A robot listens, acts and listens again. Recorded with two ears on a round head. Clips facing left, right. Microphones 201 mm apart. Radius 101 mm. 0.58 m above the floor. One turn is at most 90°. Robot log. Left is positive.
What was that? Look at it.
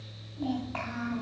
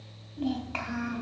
note: The child speaking: about 45° right or 135° right.
cmd yaw -45
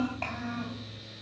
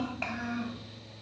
note: So it is at 15° right.
cmd yaw -15
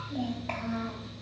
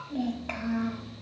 note: The child speaking is now 15° right.
cmd yaw -15
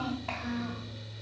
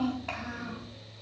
end: Found it: a child speaking, straight ahead.